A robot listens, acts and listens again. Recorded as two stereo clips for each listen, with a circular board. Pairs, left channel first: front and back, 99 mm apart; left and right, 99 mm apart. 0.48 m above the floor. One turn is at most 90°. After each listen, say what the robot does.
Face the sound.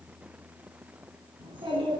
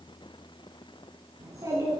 Turn 90° right.
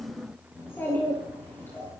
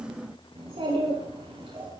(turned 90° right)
Turn 65° right.
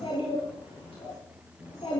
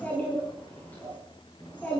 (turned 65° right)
Turn 15° left.
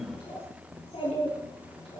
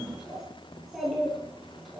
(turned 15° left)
Found it: a child speaking, straight ahead.